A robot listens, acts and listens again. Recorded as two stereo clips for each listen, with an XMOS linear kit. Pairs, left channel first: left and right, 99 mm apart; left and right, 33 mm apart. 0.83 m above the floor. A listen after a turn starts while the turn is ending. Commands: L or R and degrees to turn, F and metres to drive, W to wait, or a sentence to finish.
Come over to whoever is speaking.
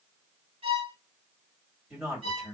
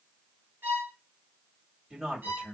L30
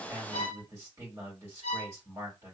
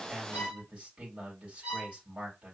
R30
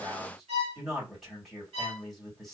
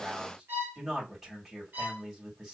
F1.0
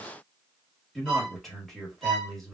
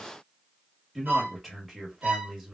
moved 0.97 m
F1.0
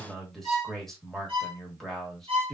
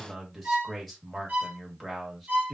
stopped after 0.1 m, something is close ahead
I am next to the man speaking.